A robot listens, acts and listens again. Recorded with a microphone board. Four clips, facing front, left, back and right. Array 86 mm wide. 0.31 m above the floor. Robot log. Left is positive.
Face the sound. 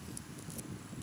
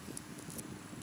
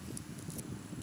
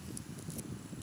cmd idle
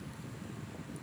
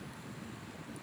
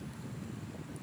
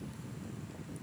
cmd idle
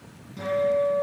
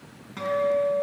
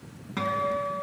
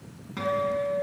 note: The guitar: 170° right.
cmd yaw -170
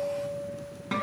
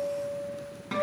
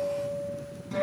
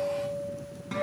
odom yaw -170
note: The guitar is now 20° left.
cmd yaw +20
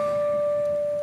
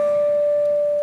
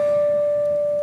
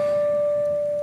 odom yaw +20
end: Found it: a guitar, straight ahead.